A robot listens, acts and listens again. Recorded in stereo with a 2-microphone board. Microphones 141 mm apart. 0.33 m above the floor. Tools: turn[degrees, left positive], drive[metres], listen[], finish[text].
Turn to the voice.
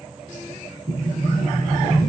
Action: listen[]
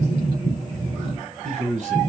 Thought: The man speaking: about 60° right or 120° right.
Action: turn[-60]
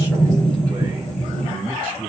Thought: So it is at 20° right.
Action: turn[-20]
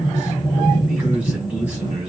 Thought: The man speaking is now 10° right.
Action: turn[-10]
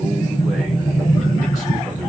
Action: listen[]
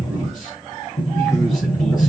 Action: listen[]
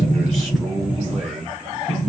Action: finish[Found it: a man speaking, straight ahead.]